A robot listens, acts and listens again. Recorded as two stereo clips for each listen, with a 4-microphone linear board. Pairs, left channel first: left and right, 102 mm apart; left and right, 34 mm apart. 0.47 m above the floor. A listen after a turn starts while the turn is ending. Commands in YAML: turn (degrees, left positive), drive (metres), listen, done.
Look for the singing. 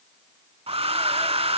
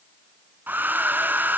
listen: true
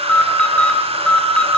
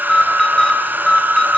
listen: true
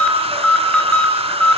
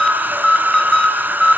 done: "I can't make out singing to turn to."